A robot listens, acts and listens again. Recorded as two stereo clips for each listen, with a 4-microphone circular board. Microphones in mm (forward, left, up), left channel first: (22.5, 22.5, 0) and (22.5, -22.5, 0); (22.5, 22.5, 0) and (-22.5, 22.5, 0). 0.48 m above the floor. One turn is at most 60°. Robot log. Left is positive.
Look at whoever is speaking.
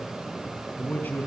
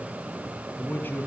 note: The man speaking: 45° left.
cmd yaw +45
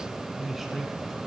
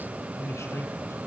end: Facing the man speaking, over 4 m away.